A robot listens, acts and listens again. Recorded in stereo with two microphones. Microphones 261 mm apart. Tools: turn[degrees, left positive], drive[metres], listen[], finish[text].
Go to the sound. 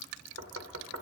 Thought: The knocking: about 70° right or 110° right.
Action: turn[-70]
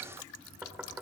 Action: drive[1.0]
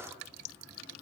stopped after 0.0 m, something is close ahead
Action: listen[]
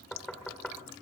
Action: finish[Blocked. The knocking is further on, straight ahead.]